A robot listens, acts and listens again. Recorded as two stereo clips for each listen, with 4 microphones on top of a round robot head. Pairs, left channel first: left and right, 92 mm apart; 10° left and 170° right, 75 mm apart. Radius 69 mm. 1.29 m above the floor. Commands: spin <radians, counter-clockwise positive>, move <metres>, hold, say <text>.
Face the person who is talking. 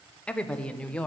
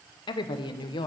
spin 0.17
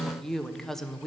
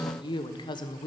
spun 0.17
say Found it: a woman speaking, straight ahead, under 1 m away.